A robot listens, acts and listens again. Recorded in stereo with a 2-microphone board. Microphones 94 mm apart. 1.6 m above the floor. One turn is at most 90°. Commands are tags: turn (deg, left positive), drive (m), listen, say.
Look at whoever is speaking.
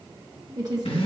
<turn deg="-40"/>
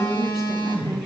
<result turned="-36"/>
<listen/>
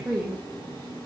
<say>Found it: a woman speaking, straight ahead, 1 to 2 m away.</say>